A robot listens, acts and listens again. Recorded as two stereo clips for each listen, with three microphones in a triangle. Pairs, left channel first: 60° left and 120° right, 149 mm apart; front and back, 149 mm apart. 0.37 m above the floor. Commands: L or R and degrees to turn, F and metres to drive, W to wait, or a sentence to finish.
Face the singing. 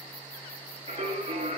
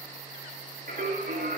R160
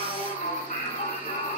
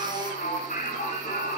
L30
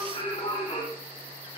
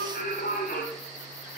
Found it: singing, straight ahead, 2 to 4 m away.